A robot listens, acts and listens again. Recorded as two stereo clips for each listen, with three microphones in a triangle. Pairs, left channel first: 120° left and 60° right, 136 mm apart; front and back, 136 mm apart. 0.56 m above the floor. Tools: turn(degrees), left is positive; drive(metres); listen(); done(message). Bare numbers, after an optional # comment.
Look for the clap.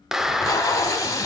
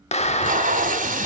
# The clap: 25° left.
turn(25)
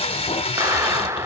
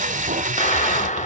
done("Found it: a clap, straight ahead, under 1 m away.")